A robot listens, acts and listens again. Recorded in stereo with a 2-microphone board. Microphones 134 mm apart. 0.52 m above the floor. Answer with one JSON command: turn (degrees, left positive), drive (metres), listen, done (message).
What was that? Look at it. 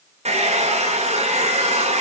{"turn": -60}
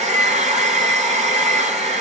{"turn": -65}
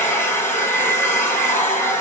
{"turn": 15}
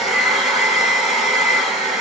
{"done": "Found it: a hair dryer, straight ahead, over 4 m away."}